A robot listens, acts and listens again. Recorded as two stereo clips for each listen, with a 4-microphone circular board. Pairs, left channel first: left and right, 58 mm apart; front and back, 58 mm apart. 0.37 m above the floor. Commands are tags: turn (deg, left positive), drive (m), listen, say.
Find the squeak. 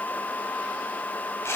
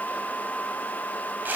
<listen/>
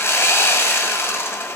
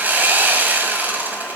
<listen/>
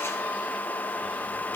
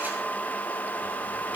<say>I can't make out a squeak to turn to.</say>